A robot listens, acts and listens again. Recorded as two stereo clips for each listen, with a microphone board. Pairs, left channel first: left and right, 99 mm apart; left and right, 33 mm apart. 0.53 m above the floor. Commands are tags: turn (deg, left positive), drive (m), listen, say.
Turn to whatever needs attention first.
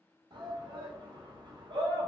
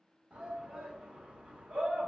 <turn deg="-55"/>
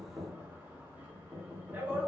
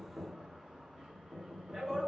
<turn deg="-25"/>
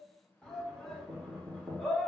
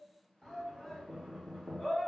<say>Found it: a shout, straight ahead, 1 to 2 m away.</say>